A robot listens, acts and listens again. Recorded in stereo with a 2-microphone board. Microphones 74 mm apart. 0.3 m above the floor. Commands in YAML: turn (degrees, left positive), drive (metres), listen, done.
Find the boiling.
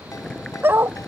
turn: 30
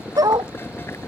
turn: 145
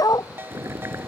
turn: -35
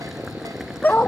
done: "Facing the boiling."